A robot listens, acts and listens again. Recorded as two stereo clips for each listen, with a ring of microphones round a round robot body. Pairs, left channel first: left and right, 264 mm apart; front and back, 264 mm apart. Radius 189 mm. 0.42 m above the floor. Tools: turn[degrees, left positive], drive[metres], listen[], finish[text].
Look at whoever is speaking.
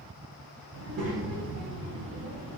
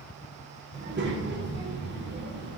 Thought: The child speaking: 135° right.
Action: turn[-135]
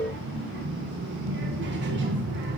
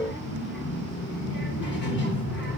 Thought: The child speaking is now 45° right.
Action: turn[-45]
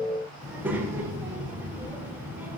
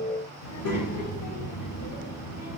Action: finish[Facing the child speaking, under 1 m away.]